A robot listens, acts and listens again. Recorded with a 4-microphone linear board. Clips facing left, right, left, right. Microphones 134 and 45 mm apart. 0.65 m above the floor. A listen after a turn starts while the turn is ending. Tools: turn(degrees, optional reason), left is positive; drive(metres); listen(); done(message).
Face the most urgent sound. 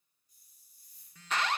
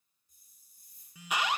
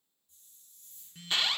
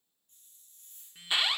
turn(degrees=-30)
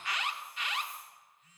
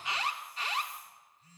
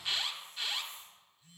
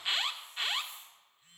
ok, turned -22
turn(degrees=-145, reason="So it is at 145° right.")
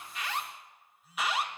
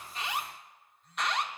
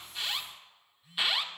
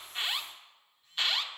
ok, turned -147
done("Facing the alarm.")